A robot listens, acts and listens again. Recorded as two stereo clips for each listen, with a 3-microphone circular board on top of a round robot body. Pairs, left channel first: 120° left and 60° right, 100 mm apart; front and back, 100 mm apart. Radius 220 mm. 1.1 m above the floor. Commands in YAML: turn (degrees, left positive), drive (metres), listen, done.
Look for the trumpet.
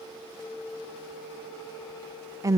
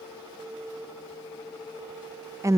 listen: true
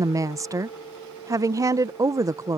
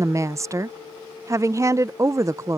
listen: true
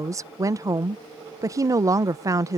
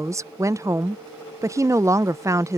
done: "I can't make out a trumpet, only a woman speaking."